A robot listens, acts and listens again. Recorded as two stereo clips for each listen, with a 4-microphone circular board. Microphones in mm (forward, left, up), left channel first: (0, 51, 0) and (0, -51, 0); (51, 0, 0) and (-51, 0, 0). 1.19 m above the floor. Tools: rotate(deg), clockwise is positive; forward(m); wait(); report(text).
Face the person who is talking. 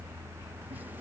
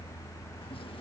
wait()
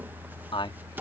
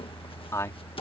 rotate(-60)
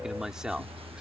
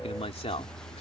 rotate(10)
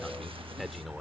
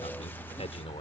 wait()
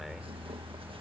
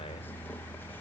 wait()
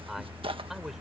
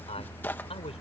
report("I heard a man speaking from this way, but can't make it out now.")